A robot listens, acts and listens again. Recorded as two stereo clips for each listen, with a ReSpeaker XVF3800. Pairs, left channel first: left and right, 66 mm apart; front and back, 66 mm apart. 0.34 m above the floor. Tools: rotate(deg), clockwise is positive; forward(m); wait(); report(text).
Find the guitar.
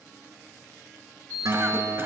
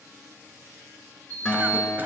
rotate(75)
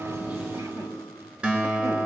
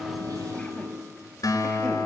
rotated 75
rotate(20)
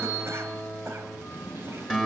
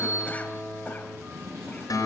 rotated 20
report("Found it: a guitar, straight ahead.")